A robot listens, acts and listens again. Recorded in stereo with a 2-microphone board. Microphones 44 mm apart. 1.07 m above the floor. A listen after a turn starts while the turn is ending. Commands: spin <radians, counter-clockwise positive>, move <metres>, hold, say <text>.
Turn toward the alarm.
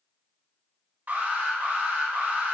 spin -0.79
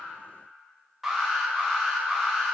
say Found it: an alarm, straight ahead, 1 to 2 m away.